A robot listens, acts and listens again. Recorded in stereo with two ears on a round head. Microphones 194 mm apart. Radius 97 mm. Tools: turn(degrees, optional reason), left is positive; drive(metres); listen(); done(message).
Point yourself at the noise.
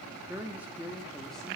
turn(degrees=-30)
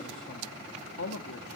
turn(degrees=60, reason="So it is at 60° left.")
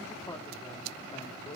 turn(degrees=25, reason="The man speaking is now 25° left.")
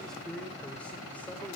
done("Found it: a man speaking, straight ahead.")